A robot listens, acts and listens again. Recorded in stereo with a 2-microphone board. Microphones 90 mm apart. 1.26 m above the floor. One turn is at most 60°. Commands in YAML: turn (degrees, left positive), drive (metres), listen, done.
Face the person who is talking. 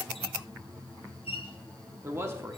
turn: -30
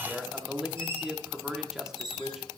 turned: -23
done: "Found it: a man speaking, straight ahead."